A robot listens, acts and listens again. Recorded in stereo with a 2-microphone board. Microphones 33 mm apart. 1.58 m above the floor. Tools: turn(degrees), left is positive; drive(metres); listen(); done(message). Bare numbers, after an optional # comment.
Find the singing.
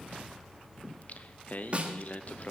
# The singing: about 50° left or 130° left.
turn(50)
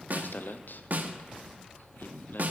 # So it is at 75° left.
turn(75)
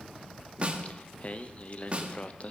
# The singing is now 40° left.
turn(40)
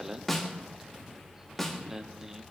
# The singing is now 15° right.
turn(-15)
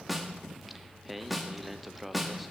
done("Facing the singing.")